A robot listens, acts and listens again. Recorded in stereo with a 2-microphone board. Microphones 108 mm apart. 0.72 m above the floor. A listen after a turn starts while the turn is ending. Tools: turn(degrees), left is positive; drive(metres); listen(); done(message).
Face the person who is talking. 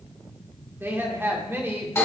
turn(degrees=-20)
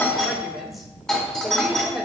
done("Found it: a woman speaking, straight ahead, 1 to 2 m away.")